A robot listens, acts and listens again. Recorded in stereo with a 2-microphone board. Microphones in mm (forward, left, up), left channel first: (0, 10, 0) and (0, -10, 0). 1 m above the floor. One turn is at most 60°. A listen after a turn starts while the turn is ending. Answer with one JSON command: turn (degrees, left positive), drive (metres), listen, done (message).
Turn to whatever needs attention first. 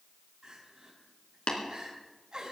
{"turn": -45}
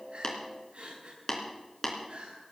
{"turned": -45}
{"turn": -60}
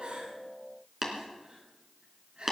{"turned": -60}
{"turn": -50}
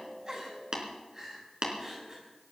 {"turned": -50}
{"turn": -20}
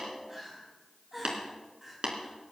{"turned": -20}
{"turn": -10}
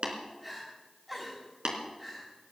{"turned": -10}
{"done": "Found it: crying, straight ahead, over 4 m away."}